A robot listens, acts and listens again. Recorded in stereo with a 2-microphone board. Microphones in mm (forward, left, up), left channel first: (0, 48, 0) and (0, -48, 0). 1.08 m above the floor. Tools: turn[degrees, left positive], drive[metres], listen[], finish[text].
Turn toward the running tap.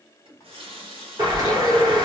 Thought: The running tap: about 75° right or 105° right.
Action: turn[-75]
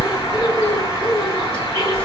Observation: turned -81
Action: listen[]
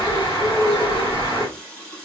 Thought: So it is at 10° left.
Action: turn[10]
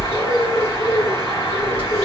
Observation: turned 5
Action: listen[]
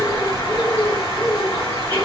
Action: listen[]
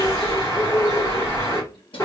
Action: finish[I heard a running tap from this way, but can't make it out now.]